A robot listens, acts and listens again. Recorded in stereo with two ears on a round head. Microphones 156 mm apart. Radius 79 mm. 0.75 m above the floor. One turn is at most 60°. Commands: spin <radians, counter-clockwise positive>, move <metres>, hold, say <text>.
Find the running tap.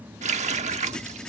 spin -0.70
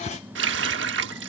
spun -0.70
spin -1.05
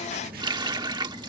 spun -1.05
spin -0.44
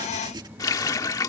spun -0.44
spin 0.35
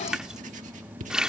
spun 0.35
say Facing the running tap.